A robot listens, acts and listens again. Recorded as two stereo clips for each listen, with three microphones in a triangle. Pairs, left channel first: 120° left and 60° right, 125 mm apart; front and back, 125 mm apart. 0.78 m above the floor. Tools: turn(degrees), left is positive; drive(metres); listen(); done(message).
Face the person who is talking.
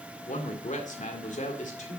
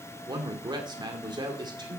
turn(degrees=125)
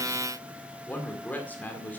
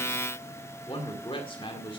turn(degrees=45)
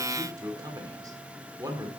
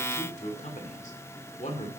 done("Facing the man speaking, 2 to 4 m away.")